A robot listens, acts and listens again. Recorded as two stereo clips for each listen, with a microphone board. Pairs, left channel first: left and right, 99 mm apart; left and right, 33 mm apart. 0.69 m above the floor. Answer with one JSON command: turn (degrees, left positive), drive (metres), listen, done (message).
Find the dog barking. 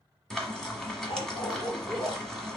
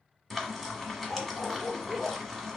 {"turn": 90}
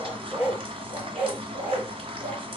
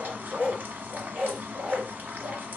{"turn": -25}
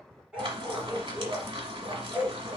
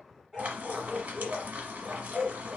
{"turn": -10}
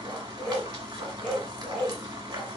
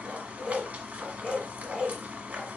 {"done": "Facing the dog barking."}